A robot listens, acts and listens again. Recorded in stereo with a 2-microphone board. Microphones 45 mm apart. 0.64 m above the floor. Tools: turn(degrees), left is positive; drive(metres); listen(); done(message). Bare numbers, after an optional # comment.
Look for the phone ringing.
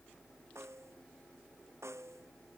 listen()
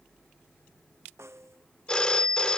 # The phone ringing: about 20° left or 160° left.
turn(20)
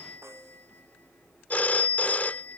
# So it is at 145° left.
turn(145)
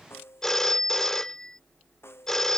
# The phone ringing is now 10° left.
turn(10)
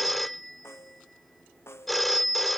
done("Found it: a phone ringing, straight ahead.")